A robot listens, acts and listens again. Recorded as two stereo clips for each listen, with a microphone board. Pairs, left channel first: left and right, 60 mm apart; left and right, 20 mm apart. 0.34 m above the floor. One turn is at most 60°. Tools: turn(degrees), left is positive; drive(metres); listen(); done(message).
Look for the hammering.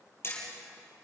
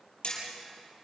turn(degrees=45)
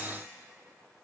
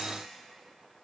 listen()
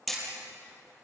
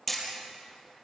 done("Facing the hammering, over 4 m away.")